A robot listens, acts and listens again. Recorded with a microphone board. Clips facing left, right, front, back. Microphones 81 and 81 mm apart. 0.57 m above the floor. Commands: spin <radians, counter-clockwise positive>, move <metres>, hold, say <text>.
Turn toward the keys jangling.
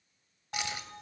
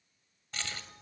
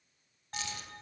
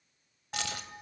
spin 2.88
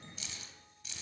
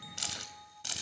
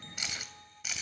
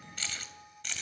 spin -1.48
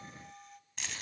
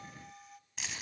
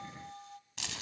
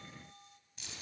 say Facing the keys jangling.